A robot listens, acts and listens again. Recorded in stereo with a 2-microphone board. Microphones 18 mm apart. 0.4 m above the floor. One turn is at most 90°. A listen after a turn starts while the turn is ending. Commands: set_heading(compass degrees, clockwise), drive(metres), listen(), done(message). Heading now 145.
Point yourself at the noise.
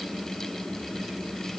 listen()
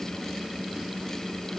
listen()
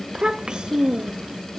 set_heading(200)
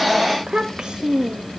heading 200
set_heading(255)
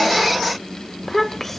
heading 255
set_heading(235)
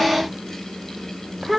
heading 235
done("Found it: a child speaking, straight ahead.")